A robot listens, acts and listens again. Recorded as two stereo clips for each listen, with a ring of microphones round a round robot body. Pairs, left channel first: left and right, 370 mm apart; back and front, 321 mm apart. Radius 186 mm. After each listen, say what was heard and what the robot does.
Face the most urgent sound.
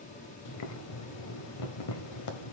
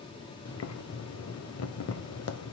Keep listening.
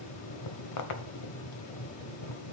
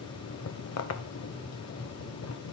Keep listening.
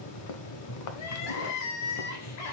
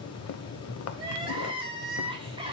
The crying: 75° left. Turn 75° left.
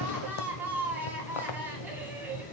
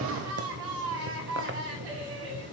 Found it: crying, straight ahead.